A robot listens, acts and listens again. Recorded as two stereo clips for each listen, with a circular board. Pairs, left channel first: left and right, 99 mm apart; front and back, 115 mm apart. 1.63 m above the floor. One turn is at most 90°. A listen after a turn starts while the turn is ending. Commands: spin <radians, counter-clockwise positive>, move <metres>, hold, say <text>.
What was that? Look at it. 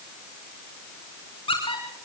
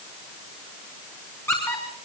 spin 1.22
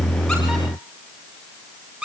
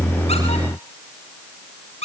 spin -0.26
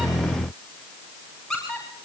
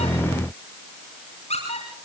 say Facing the squeak, over 4 m away.